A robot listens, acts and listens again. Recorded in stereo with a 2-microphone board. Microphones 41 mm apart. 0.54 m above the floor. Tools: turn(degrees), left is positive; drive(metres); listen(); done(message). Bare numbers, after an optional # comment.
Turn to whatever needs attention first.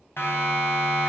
# The siren: about 70° left or 110° left.
turn(70)
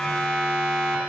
# So it is at 10° left.
turn(10)
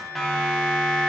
done("Facing the siren, 2 to 4 m away.")